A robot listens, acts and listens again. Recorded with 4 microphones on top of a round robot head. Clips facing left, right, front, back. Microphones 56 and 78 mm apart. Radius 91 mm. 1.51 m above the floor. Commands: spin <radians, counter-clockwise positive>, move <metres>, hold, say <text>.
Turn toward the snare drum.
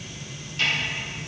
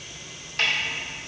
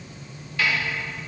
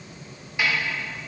spin -1.83
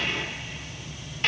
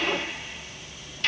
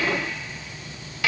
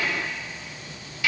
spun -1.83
spin 0.52
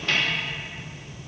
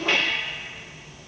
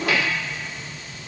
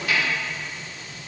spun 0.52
hold
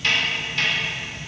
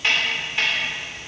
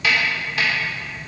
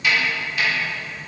spin -0.26
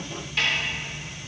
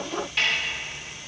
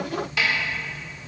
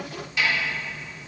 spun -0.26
say Facing the snare drum.